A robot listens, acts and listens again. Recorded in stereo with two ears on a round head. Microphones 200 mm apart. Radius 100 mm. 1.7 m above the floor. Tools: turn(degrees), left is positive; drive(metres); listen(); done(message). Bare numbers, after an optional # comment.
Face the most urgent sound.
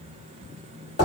listen()
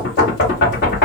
listen()
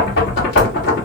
done("I can't make out anything urgent, only knocking.")